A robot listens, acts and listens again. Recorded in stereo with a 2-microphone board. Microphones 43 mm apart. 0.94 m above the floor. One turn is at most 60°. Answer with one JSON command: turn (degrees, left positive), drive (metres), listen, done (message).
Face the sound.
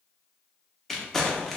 {"turn": 30}
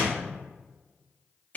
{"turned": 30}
{"turn": 60}
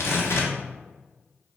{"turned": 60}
{"turn": 60}
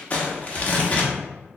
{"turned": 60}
{"turn": 35}
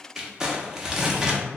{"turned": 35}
{"turn": -15}
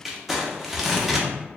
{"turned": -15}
{"done": "Facing the crumpling, under 1 m away."}